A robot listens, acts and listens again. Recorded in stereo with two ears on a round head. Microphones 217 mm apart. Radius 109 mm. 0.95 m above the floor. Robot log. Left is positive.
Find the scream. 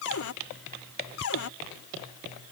cmd idle
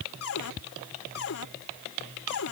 cmd idle
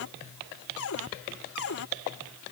end: I can't make out a scream, only a cupboard door.